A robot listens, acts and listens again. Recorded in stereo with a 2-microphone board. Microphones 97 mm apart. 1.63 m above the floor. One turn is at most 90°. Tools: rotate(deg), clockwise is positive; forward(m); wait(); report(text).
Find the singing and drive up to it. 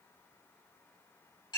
wait()
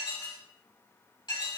wait()
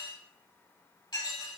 report("I can't make out singing, only dishes clattering.")